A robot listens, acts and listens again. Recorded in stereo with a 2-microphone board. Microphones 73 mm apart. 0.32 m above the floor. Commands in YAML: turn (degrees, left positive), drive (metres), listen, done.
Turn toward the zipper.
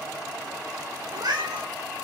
listen: true
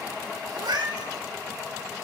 listen: true
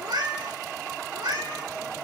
done: "I can't make out a zipper, only a cat meowing."